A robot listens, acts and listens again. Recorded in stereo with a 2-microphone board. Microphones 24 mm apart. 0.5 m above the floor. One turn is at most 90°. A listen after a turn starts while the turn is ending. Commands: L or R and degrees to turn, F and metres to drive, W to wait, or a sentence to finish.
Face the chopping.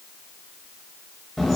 W
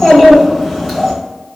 W
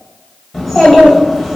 I can't make out chopping to turn to.